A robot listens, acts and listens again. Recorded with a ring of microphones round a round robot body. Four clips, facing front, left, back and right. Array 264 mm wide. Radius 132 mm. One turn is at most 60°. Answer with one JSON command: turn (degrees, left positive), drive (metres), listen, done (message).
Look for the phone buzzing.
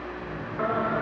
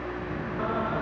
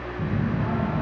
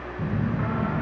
{"turn": -60}
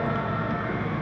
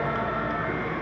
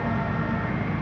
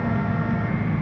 {"turn": -60}
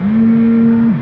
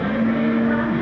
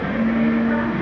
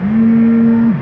{"turn": -35}
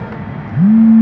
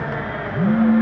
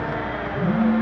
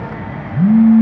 {"turn": -25}
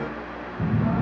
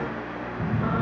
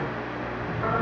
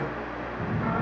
{"turn": 10}
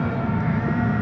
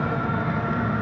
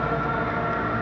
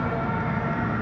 {"done": "Found it: a phone buzzing, straight ahead, 1 to 2 m away."}